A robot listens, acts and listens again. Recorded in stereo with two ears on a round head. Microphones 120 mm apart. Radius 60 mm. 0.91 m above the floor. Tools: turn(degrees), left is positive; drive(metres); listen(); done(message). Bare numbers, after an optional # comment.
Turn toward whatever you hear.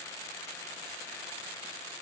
listen()
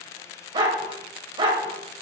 # The dog barking: about 40° right or 140° right.
turn(-40)
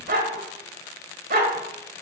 # So it is at 105° right.
turn(-105)
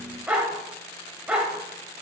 # The dog barking is now 10° right.
turn(-10)
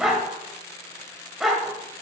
done("Facing the dog barking, 1 to 2 m away.")